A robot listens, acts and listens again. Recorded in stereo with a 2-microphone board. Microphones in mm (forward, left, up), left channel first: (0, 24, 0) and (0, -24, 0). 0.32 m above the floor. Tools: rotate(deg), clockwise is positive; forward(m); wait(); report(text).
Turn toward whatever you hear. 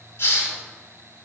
rotate(-65)
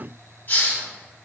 rotate(-45)
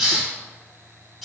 report("Facing the hiss, 1 to 2 m away.")